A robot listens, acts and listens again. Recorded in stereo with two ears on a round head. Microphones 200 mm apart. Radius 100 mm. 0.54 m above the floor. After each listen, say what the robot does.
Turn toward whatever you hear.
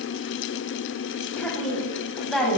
Turn 30° left.
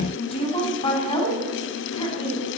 Turn 155° left.
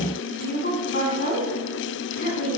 Turn 40° left.
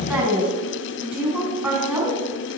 Found it: a woman speaking, straight ahead.